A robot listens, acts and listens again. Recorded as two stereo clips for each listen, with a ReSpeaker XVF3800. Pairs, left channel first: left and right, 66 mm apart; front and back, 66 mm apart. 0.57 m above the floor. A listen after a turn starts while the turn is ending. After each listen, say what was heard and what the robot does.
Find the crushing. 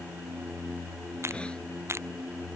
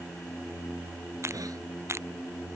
The crushing: 135° right. Turn 135° right.
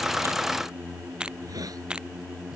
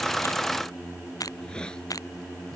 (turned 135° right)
The crushing is now 15° right. Turn 15° right.
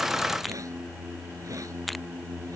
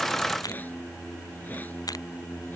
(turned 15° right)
Found it: crushing, straight ahead.